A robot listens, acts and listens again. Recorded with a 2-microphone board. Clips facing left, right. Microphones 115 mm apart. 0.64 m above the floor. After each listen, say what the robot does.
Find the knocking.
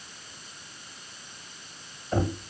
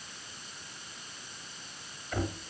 Turn 40° left.
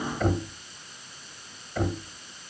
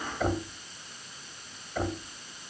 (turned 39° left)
Found it: knocking, straight ahead.